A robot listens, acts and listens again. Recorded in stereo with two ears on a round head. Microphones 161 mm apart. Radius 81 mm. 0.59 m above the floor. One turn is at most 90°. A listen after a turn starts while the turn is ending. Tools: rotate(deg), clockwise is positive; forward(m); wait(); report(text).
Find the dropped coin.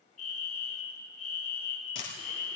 rotate(-90)
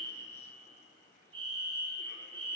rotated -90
report("I heard a dropped coin from this way, but can't make it out now.")